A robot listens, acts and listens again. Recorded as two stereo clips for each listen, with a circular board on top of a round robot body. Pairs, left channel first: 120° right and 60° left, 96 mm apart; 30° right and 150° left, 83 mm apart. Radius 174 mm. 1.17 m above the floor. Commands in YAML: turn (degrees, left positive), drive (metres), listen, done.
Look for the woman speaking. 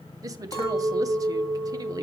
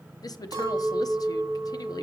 turn: 10
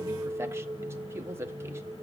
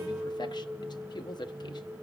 done: "Found it: a woman speaking, straight ahead, under 1 m away."